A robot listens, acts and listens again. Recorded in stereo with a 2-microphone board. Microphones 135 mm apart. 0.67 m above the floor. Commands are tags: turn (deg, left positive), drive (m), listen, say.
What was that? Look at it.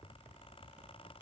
<listen/>
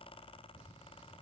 <listen/>
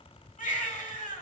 <turn deg="90"/>
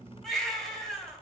<say>Found it: a baby crying, straight ahead, 1 to 2 m away.</say>